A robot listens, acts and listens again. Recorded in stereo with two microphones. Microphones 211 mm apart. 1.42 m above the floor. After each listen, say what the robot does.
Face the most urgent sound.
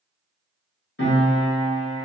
Keep listening.
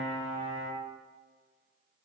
Keep listening.
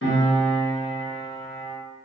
I can't make out anything urgent to turn to.